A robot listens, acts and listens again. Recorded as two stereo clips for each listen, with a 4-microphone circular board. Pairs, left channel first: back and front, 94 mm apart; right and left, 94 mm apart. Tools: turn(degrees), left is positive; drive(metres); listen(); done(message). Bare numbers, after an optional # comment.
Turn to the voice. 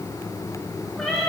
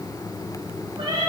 listen()
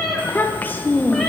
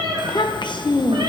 # The child speaking: 110° right.
turn(-110)
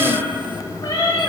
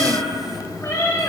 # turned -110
listen()
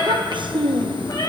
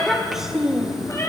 done("Facing the child speaking, under 1 m away.")